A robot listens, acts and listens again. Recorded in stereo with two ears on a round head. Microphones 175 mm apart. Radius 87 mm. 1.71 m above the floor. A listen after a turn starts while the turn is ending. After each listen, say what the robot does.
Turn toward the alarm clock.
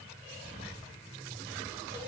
Keep listening.
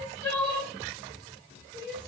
Keep listening.
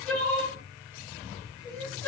I can't make out an alarm clock, only crying.